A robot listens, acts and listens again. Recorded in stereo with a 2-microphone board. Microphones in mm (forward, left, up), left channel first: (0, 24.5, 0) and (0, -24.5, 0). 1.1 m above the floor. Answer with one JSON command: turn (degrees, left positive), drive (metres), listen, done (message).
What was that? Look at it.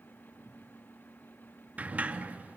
{"turn": -30}
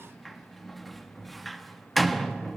{"done": "Found it: a sliding door, straight ahead, 1 to 2 m away."}